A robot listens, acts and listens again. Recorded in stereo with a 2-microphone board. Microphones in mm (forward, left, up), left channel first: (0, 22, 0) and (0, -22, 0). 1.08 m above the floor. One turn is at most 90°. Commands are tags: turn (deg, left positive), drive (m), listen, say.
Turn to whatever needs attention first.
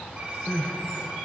<turn deg="25"/>
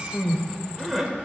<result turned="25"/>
<say>Facing the crying, 1 to 2 m away.</say>